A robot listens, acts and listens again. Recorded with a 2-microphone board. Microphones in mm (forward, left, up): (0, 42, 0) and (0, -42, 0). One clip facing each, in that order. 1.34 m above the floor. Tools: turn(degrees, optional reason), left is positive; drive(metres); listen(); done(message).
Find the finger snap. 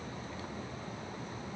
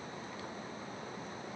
listen()
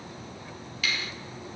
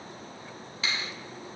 turn(degrees=-30, reason="The finger snap: about 30° right or 150° right.")
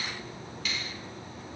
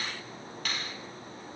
turn(degrees=-125, reason="So it is at 125° right.")
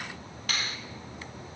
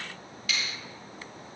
turn(degrees=50, reason="The finger snap is now 50° left.")
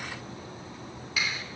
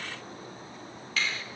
turn(degrees=10, reason="The finger snap is now 10° left.")
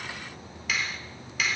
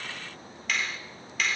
done("Found it: a finger snap, straight ahead, 2 to 4 m away.")